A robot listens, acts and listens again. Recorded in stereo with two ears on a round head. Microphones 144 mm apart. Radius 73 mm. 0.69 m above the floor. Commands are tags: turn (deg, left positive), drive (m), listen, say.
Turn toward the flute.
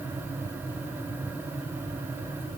<listen/>
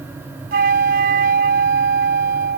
<turn deg="-55"/>
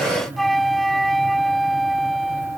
<say>Facing the flute.</say>